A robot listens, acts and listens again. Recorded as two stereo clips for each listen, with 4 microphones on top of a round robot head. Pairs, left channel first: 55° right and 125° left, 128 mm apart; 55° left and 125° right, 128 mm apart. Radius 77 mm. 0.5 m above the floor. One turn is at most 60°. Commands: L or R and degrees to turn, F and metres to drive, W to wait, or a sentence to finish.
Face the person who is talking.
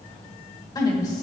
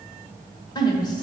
Facing the woman speaking.